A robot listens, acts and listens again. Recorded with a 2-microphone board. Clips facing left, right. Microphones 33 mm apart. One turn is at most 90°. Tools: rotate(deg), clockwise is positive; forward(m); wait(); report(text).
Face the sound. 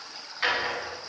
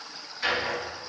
rotate(-35)
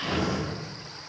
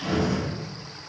report("Facing the drawer, 1 to 2 m away.")